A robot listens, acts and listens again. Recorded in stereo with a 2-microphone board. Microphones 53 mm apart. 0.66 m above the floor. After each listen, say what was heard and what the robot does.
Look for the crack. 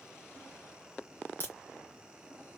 The crack: about 45° left or 135° left. Turn 45° left.
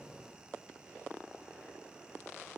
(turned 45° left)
Keep listening.
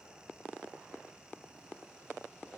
I heard a crack, but can't make it out now. It was about straight ahead or 90° left.